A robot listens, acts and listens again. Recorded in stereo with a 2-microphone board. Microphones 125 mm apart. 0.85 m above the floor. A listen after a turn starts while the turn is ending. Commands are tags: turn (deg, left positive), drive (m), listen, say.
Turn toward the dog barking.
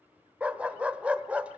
<turn deg="-30"/>
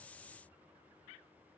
<listen/>
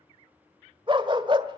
<turn deg="-135"/>
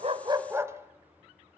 <turn deg="-20"/>
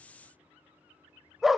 <say>Facing the dog barking.</say>